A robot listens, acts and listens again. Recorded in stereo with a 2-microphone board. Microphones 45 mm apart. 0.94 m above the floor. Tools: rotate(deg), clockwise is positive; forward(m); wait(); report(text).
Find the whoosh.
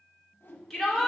rotate(-60)
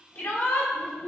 wait()
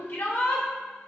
wait()
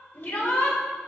report("I heard a whoosh, but can't make it out now. It was about straight ahead or 60° left.")